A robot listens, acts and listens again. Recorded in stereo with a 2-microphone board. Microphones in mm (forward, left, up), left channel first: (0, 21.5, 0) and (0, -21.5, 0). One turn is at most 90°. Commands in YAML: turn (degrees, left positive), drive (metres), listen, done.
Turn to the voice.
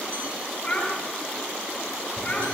turn: 25
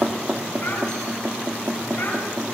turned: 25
listen: true
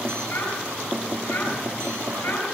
turn: 90
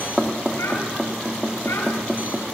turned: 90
turn: 40
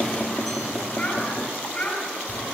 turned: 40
turn: 35
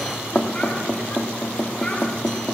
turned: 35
listen: true
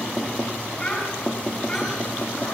turn: 30
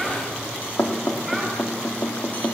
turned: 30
listen: true
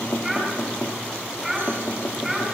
done: "Facing the child speaking, over 4 m away."